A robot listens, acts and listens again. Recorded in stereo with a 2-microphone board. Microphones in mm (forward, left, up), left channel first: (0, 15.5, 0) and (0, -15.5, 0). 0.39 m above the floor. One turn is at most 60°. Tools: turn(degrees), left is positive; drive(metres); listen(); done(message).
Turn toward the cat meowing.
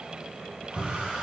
listen()
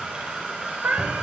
turn(degrees=-60)
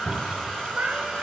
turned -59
turn(degrees=-50)
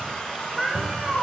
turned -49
done("Found it: a cat meowing, straight ahead, 1 to 2 m away.")